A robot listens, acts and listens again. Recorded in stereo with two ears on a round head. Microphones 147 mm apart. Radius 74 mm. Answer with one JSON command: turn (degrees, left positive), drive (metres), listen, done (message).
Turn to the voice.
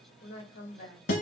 {"turn": 55}
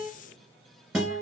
{"listen": true}
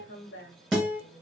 {"turn": 70}
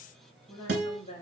{"turn": 30}
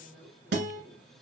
{"turn": 10}
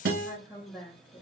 {"done": "Facing the woman speaking, 1 to 2 m away."}